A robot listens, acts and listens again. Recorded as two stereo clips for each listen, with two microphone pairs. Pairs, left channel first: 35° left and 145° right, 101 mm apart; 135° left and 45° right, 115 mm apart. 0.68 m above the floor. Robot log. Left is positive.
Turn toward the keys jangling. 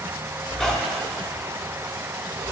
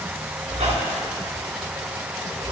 cmd idle
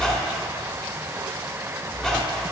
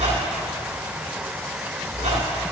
cmd idle
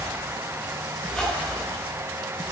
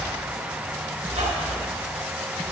end: I can't make out keys jangling, only a squeak.